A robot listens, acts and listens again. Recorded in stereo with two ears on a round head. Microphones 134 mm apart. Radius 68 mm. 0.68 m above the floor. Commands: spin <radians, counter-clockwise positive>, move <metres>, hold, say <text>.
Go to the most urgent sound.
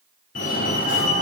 spin 0.96
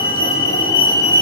spin 0.52
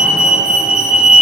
move 1.0
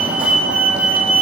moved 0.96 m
spin -0.17
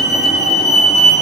move 1.0
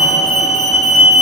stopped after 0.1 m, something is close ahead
say I am next to the fire alarm.